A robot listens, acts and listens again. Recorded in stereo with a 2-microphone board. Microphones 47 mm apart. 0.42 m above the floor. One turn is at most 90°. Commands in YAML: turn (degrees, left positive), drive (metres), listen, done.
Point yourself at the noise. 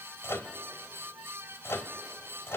turn: 65
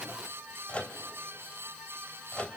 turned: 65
turn: 30
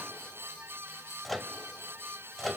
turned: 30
done: "Facing the microwave, 1 to 2 m away."